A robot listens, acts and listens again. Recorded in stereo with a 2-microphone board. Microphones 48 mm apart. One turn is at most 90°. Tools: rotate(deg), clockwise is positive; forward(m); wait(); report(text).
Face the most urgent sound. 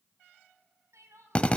rotate(90)
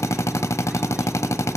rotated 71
rotate(20)
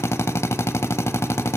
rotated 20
wait()
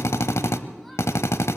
report("I heard crying from this way, but can't make it out now.")